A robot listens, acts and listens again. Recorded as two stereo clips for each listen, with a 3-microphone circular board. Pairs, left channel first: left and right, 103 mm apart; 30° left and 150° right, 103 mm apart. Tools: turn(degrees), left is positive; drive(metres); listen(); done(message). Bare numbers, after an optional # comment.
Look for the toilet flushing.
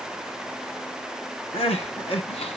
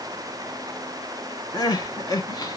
listen()
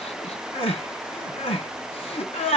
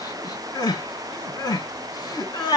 listen()
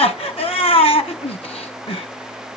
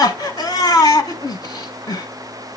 done("I can't make out a toilet flushing, only crying.")